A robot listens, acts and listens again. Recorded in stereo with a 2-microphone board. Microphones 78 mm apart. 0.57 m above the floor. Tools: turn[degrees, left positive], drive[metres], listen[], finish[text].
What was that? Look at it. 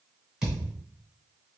Action: turn[-30]
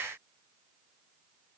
Action: listen[]
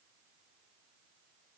Action: finish[I heard a thud, but can't make it out now. It was about 20° left or 140° right.]